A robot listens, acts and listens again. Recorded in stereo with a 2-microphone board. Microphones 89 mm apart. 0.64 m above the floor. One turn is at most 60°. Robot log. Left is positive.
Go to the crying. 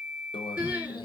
cmd yaw -30
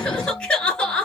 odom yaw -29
note: So it is at 15° left.
cmd yaw +15
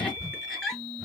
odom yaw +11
cmd fwd 1.0
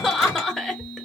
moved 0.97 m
cmd fwd 1.0
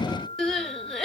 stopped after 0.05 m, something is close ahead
end: I am next to the crying.